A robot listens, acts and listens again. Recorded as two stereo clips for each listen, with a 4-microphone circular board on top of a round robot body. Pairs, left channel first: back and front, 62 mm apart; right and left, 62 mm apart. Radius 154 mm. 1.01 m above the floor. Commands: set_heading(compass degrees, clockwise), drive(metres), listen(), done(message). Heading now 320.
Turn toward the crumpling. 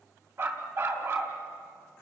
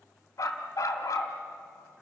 listen()
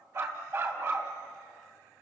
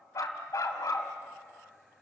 listen()
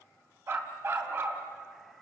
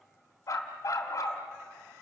done("I can't make out crumpling, only a dog barking.")